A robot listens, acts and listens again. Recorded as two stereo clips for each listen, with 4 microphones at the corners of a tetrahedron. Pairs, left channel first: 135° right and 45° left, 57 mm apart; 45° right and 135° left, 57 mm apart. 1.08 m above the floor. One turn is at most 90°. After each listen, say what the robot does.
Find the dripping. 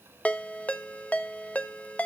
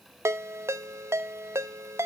Keep listening.
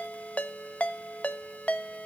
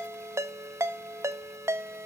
Keep listening.
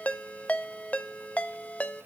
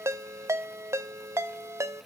I can't make out dripping to turn to.